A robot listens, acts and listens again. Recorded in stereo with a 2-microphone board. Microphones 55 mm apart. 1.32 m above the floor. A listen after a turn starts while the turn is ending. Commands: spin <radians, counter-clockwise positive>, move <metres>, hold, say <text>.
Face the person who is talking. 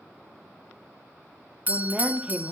spin -0.26
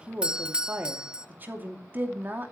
spin -2.53
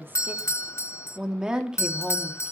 spin -0.26
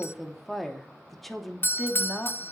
say Found it: a woman speaking, straight ahead.